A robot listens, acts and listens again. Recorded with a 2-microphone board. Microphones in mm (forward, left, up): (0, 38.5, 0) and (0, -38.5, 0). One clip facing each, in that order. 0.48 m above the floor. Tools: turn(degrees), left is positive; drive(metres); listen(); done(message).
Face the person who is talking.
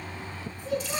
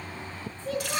turn(degrees=30)
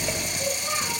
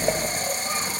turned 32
listen()
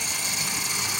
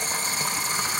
listen()
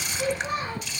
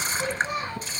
turn(degrees=135)
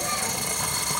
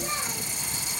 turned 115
turn(degrees=20)
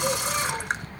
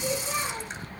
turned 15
listen()
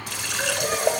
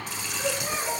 done("Facing where the child speaking came from. I can't hear it now.")